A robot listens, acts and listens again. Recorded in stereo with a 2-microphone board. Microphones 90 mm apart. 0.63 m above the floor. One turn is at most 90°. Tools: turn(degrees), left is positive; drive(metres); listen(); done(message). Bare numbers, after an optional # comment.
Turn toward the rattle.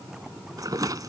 # The rattle: about 45° right or 135° right.
turn(-45)
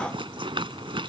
# So it is at 90° right.
turn(-90)
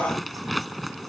done("Found it: a rattle, straight ahead.")